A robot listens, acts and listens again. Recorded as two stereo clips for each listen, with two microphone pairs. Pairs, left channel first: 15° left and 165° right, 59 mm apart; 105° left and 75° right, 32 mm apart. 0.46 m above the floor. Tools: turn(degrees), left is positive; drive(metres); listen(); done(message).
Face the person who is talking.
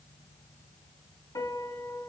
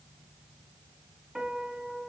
listen()
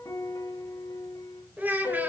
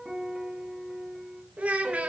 turn(degrees=-110)
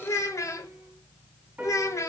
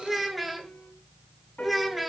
turn(degrees=15)
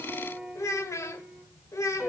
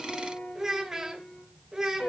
done("Found it: a child speaking, straight ahead, 1 to 2 m away.")